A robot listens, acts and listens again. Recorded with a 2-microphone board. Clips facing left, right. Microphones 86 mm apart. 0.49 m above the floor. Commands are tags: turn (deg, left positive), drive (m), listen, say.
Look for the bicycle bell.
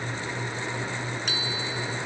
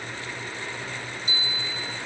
<turn deg="90"/>
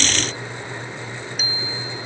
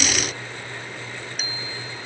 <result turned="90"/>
<say>Facing the bicycle bell.</say>